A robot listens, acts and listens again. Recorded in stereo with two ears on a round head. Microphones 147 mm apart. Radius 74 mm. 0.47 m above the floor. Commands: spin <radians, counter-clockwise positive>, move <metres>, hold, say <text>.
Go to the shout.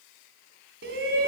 spin -1.57
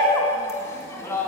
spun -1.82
spin 0.35
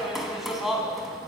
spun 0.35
move 1.0
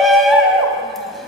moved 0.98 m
move 1.0
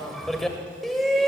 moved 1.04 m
move 1.0
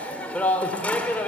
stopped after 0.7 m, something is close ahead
spin 0.17
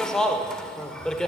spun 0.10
say Arrived at the shout, straight ahead.